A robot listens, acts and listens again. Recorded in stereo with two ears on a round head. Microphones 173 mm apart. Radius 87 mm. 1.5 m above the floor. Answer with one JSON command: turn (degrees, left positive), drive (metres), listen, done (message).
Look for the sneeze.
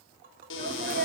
{"turn": -50}
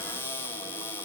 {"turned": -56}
{"listen": true}
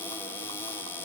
{"done": "I heard a sneeze, but can't make it out now. It was about 5° left or 75° right."}